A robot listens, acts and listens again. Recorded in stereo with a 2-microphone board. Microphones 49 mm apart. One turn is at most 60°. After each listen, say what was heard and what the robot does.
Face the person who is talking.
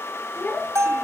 The child speaking: about 30° left or 150° left. Turn 30° left.
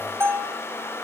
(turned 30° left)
Keep listening.
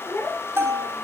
So it is at 120° left. Turn 60° left.
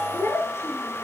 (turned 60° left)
The child speaking is now 60° left. Turn 60° left.
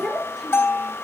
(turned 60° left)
Facing the child speaking, over 4 m away.